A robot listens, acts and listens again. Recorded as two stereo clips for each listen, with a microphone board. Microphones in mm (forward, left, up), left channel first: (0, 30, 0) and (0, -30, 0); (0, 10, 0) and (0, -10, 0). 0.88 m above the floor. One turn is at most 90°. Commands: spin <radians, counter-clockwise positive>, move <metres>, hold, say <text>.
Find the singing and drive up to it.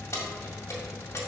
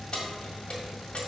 hold
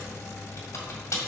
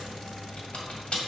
hold
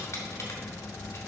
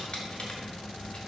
say I can't make out singing, only keys jangling.